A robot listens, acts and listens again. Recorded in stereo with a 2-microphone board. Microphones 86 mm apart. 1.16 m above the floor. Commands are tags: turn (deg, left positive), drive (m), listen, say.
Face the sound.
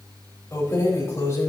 <turn deg="35"/>
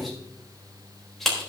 <say>Facing the keys jangling.</say>